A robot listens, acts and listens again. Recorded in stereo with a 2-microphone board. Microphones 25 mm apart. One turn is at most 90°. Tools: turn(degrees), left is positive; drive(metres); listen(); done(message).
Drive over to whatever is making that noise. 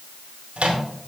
turn(degrees=-55)
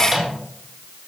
drive(metres=1.0)
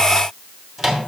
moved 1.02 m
drive(metres=1.0)
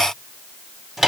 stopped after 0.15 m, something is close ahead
turn(degrees=-10)
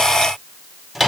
done("I am next to the microwave.")